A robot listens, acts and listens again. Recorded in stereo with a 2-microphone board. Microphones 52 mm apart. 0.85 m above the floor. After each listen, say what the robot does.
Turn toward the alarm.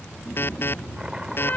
Turn 45° left.
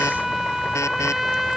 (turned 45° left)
Keep listening.
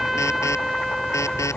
Keep listening.
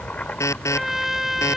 Turn 85° left.
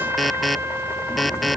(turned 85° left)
Found it: an alarm, straight ahead.